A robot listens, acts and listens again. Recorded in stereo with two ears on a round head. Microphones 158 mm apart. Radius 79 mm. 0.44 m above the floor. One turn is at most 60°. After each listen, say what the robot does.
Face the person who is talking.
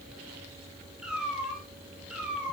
Keep listening.
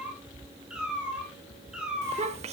Turn 35° right.
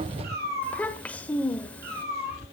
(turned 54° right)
Turn 10° left.
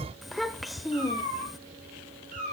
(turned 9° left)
Facing the child speaking.